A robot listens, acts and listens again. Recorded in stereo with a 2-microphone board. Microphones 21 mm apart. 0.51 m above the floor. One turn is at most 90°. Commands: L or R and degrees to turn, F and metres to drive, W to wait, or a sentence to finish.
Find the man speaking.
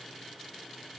W
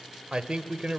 R60
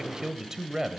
R20
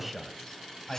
L10
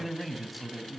Found it: a man speaking, straight ahead, 2 to 4 m away.